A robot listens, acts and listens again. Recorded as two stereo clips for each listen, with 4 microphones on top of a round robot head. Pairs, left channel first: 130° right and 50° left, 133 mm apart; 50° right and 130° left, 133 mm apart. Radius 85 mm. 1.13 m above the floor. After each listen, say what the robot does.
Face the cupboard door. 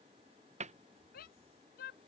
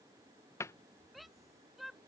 Turn 20° left.
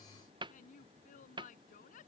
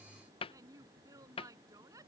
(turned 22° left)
Found it: a cupboard door, straight ahead.